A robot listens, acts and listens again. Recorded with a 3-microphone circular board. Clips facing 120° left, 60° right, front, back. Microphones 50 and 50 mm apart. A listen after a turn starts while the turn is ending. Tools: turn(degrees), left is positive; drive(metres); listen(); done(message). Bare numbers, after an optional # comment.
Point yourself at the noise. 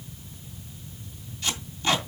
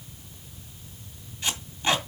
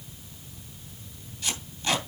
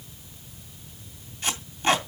# The tape being pulled: 125° right.
turn(-125)
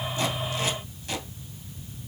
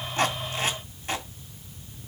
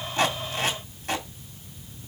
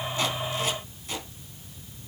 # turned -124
done("Facing the tape being pulled, 2 to 4 m away.")